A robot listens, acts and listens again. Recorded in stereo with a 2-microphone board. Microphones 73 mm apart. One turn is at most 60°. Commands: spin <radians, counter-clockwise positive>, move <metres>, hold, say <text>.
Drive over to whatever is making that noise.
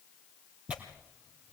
spin -0.26
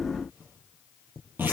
spin -1.05
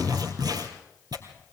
spin -1.05
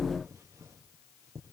spin -0.61
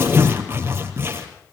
spin -0.61
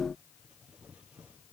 hold
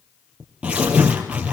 spin -0.26
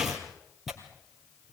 move 1.0
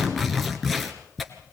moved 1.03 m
move 1.0
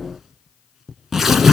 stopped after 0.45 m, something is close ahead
say I am next to the tearing paper.